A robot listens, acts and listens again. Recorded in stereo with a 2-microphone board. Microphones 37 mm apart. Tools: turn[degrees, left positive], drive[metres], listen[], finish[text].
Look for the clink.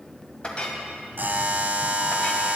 Thought: The clink: about 30° left or 150° left.
Action: turn[30]
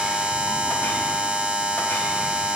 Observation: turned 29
Action: listen[]
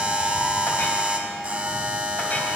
Action: listen[]
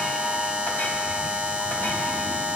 Action: finish[I heard a clink, but can't make it out now. It was about 5° left or 120° left.]